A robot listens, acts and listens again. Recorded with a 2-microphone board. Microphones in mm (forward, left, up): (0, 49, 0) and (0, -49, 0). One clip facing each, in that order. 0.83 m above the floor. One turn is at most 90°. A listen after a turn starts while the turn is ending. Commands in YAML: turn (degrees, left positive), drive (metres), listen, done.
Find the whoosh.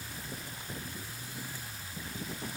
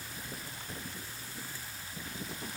listen: true
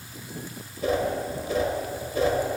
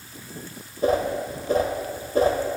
turn: -40
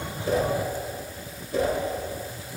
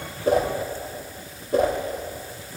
turn: -90
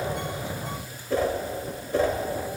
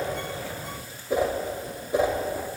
turn: -20
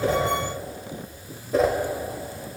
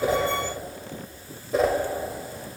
done: "Found it: a whoosh, straight ahead, under 1 m away."